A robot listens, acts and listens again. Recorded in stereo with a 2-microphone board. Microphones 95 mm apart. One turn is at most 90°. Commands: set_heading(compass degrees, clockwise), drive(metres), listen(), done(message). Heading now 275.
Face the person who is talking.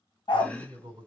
set_heading(330)
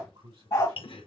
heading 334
set_heading(39)
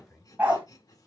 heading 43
done("Facing the man speaking, 2 to 4 m away.")